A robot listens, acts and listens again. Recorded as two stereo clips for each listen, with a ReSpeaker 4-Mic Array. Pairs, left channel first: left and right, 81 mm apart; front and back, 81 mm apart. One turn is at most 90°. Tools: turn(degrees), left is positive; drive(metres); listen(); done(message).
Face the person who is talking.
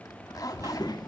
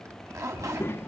turn(degrees=60)
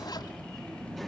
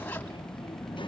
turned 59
done("Found it: a child speaking, straight ahead, under 1 m away.")